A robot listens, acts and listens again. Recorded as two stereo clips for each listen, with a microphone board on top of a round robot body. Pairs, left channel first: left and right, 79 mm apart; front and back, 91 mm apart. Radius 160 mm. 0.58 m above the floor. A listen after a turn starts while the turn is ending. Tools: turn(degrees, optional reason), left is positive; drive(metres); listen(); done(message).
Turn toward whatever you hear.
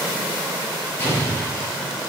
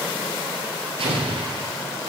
turn(degrees=155, reason="The explosion: 155° left.")
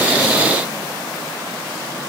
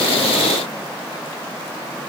done("Facing where the explosion came from. I can't hear it now.")